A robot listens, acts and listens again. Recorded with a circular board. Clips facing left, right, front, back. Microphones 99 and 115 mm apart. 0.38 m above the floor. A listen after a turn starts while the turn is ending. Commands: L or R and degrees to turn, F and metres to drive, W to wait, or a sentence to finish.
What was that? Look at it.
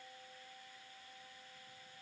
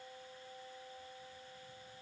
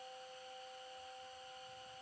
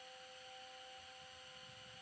W
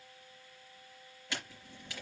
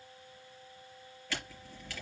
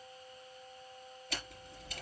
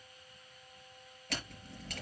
L160
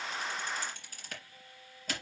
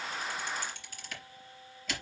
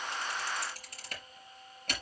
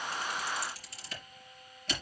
L40
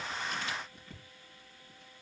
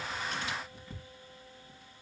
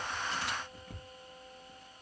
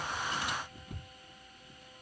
Facing the camera shutter, over 4 m away.